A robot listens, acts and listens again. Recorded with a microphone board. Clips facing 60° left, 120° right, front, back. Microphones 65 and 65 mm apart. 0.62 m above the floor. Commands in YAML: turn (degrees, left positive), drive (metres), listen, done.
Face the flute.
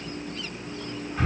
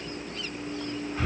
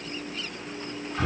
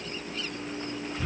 listen: true
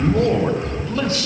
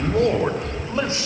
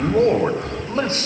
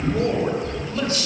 listen: true
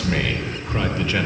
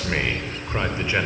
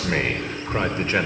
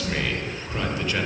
done: "I can't make out a flute, only breathing and a man speaking."